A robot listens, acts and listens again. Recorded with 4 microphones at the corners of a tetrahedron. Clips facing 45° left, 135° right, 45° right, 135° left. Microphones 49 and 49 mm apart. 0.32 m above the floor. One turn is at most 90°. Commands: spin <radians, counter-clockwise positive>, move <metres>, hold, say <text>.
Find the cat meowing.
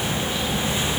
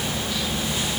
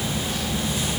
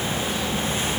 hold
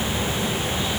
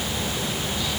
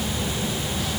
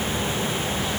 hold
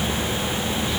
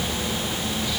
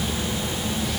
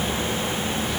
say I can't make out a cat meowing.